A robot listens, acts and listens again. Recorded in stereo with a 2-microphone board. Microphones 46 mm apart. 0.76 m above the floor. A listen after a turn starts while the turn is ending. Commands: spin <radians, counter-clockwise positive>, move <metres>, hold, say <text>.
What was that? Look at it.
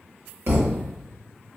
spin -0.96
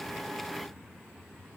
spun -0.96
hold
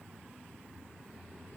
say I heard a thud, but can't make it out now. It was about straight ahead or 70° right.